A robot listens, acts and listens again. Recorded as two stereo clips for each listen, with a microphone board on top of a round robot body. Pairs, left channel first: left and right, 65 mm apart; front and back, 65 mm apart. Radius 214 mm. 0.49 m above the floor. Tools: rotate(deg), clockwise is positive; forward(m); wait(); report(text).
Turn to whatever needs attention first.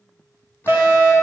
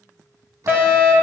rotate(125)
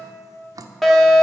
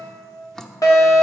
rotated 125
report("Facing the fire alarm, 2 to 4 m away.")